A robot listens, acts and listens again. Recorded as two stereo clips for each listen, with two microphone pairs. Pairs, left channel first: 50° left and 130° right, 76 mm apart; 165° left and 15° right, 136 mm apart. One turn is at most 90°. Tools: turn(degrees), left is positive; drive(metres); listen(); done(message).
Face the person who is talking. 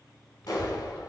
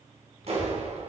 turn(degrees=90)
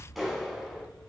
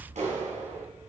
turn(degrees=55)
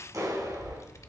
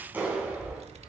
turn(degrees=10)
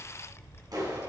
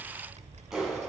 done("Facing the child speaking.")